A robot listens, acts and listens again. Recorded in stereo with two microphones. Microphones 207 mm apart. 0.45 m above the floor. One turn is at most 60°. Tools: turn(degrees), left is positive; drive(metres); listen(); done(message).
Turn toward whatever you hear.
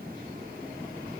listen()
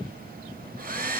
turn(degrees=-45)
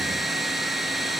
done("Facing the hair dryer.")